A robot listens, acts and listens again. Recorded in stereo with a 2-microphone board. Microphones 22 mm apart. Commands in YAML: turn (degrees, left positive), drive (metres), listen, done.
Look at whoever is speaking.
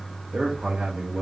turn: -60
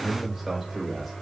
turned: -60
done: "Found it: a man speaking, straight ahead."